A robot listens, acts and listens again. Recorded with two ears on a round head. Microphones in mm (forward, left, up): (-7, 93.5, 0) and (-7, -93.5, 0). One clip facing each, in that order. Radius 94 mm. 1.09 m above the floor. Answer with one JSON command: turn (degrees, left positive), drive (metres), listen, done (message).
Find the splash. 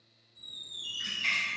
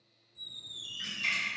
{"turn": -45}
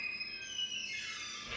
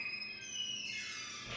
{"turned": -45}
{"listen": true}
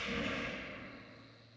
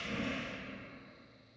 {"done": "I heard a splash, but can't make it out now. It was about straight ahead or 90° right."}